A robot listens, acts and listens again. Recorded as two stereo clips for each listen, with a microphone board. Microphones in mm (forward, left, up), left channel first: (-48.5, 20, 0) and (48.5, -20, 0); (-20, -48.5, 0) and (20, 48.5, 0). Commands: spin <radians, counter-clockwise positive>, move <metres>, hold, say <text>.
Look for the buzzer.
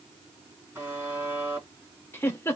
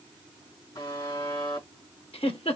spin -1.48
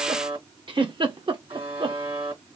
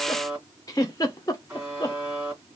spin -0.17
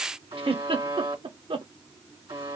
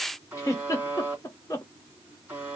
say Found it: a buzzer, straight ahead.